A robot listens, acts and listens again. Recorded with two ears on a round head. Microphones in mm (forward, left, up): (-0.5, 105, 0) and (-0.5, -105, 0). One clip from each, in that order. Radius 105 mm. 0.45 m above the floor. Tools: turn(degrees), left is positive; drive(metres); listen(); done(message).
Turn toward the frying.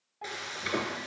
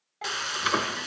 turn(degrees=-50)
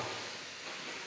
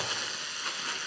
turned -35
turn(degrees=-95)
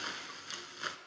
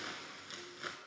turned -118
turn(degrees=25)
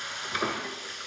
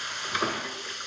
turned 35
turn(degrees=-10)
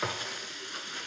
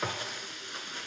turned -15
done("Found it: frying, straight ahead.")